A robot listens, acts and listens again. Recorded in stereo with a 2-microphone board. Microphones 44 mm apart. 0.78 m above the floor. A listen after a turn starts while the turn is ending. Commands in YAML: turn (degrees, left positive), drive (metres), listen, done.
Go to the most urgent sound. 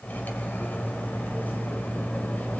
listen: true
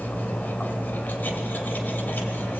listen: true
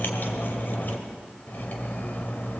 done: "I can't make out anything urgent, only cutlery clinking."